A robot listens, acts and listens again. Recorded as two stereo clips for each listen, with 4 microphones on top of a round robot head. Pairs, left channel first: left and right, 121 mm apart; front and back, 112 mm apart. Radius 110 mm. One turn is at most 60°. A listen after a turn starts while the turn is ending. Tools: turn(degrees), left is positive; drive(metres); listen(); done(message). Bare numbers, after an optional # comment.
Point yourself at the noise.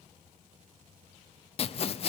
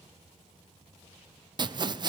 # The sawing: 130° left.
turn(60)
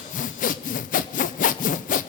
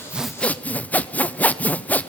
# The sawing is now 75° left.
turn(60)
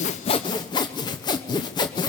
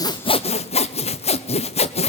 # The sawing is now 30° left.
turn(30)
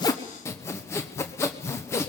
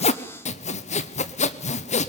# The sawing is now 15° left.
turn(15)
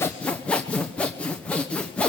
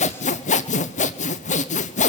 done("Facing the sawing, 1 to 2 m away.")